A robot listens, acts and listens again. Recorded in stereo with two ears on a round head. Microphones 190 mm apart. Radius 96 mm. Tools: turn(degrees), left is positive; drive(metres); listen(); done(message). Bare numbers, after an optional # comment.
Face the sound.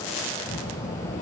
# The child speaking: about 35° left or 145° left.
turn(35)
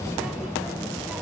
done("Found it: a child speaking, straight ahead.")